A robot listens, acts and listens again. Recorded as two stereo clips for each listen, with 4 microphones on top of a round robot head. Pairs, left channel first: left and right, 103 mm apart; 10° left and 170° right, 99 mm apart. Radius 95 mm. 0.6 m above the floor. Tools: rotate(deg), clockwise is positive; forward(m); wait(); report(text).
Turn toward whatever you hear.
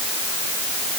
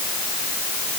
wait()
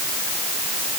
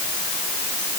wait()
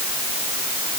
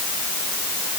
report("I can't make out anything to turn to.")